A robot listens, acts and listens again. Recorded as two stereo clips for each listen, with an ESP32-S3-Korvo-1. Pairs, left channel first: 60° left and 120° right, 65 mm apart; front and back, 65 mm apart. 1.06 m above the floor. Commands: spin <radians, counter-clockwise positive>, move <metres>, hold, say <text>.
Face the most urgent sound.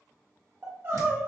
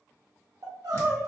spin -3.05
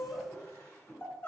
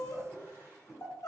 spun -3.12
say Facing the crying, under 1 m away.